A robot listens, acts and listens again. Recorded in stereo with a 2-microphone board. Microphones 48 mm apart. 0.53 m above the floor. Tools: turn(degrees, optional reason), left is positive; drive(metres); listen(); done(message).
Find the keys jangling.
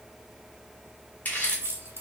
turn(degrees=-60, reason="The keys jangling: about 60° right or 120° right.")
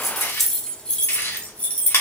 turn(degrees=35, reason="So it is at 35° left.")
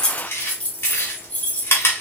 turn(degrees=35, reason="The keys jangling is now 35° left.")
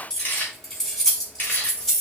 turn(degrees=10, reason="The keys jangling is now 10° left.")
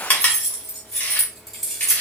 done("Found it: keys jangling, straight ahead.")